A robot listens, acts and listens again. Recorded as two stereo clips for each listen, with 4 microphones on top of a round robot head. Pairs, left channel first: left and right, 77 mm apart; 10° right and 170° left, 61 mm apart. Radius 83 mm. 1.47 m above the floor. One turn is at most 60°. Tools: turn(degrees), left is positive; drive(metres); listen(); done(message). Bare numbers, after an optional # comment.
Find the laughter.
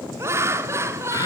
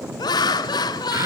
# The laughter: 30° right.
turn(-30)
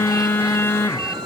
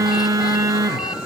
listen()
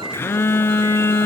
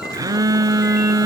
listen()
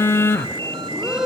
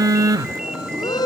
done("Facing the laughter.")